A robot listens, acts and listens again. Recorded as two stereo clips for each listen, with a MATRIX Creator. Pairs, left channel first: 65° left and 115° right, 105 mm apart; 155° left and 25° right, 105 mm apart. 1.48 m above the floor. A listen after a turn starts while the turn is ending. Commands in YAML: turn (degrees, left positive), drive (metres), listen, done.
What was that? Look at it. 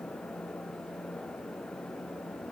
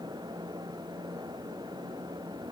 listen: true
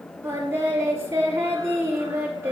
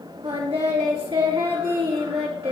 turn: -50
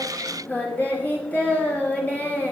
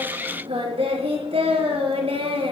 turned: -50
turn: -10
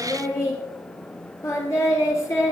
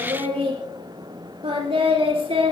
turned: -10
done: "Facing the singing."